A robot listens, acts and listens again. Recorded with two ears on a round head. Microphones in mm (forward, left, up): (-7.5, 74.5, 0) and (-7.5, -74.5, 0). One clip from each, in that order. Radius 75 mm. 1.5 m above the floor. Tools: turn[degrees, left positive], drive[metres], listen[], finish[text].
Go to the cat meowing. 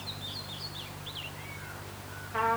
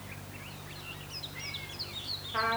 Action: listen[]
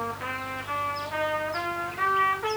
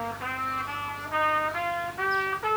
Action: listen[]
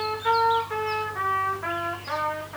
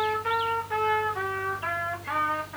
Action: finish[I can't make out a cat meowing to turn to.]